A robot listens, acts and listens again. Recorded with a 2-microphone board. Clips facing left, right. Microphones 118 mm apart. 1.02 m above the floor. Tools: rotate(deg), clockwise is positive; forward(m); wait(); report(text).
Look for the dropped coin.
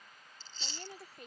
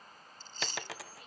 rotate(90)
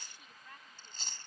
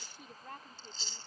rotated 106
rotate(-15)
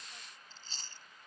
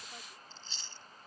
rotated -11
report("I heard a dropped coin from this way, but can't make it out now.")